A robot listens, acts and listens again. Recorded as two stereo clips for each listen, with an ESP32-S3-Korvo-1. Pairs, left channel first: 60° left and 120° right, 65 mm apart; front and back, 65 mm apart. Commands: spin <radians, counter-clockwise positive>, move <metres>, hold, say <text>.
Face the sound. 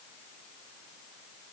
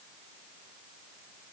hold
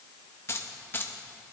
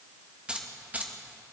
spin 2.01
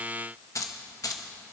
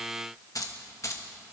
spin 0.61
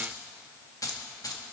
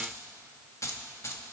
spin 0.70
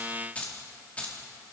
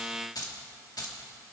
spin -0.17
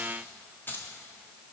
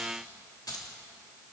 say Facing the keys jangling, 2 to 4 m away.